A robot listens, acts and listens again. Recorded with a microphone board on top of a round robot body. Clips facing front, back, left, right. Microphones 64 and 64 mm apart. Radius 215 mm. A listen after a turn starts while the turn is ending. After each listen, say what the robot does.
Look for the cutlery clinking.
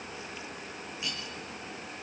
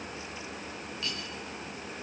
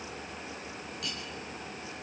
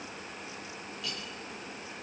Turn 75° left.
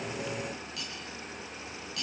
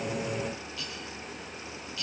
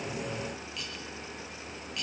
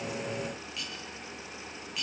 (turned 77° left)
Facing the cutlery clinking, over 4 m away.